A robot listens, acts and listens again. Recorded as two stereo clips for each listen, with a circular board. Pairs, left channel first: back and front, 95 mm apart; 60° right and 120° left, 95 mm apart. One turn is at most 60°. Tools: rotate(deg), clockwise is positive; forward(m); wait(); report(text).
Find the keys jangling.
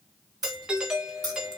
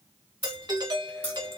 rotate(45)
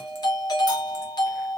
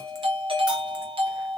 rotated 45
wait()
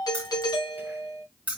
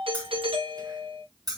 rotate(-60)
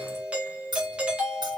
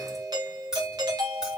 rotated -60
rotate(-35)
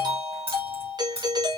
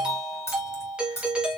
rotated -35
report("Found it: keys jangling, straight ahead.")